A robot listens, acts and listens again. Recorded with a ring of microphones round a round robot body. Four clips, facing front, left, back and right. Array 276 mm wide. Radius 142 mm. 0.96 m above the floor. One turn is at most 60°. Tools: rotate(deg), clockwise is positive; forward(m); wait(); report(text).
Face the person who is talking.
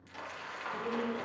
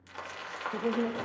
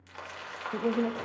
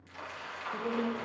rotate(-60)
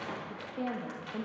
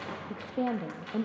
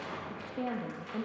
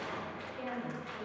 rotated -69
rotate(-60)
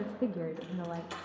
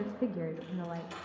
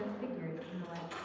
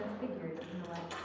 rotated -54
rotate(-35)
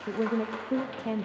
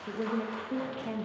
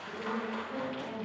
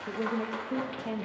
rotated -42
report("Found it: a woman speaking, straight ahead.")